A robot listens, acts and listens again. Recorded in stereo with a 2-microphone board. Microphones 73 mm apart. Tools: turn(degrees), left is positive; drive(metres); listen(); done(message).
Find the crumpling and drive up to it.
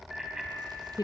listen()
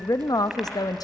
listen()
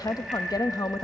done("I can't make out crumpling, only a woman speaking and a bicycle bell.")